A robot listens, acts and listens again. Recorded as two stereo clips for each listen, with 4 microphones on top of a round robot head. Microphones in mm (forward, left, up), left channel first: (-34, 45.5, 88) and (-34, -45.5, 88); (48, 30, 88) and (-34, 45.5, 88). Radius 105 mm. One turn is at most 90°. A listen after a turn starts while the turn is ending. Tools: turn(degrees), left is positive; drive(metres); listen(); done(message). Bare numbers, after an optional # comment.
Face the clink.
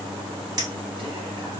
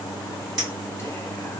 # The clink: 140° right.
turn(-90)
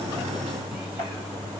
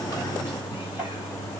# Nothing new. It was at 50° right.
turn(-50)
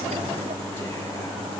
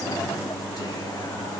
listen()
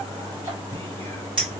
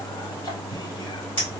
# The clink is now 50° right.
turn(-50)
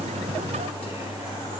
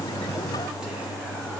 listen()
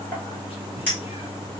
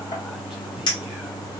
# The clink is now 15° left.
turn(15)
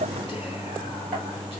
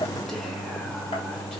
listen()
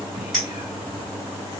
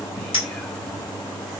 done("Found it: a clink, straight ahead.")